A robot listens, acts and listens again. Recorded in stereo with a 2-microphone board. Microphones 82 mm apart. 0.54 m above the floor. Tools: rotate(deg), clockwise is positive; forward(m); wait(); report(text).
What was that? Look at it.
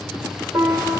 rotate(55)
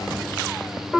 rotate(10)
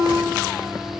report("Found it: a piano, straight ahead.")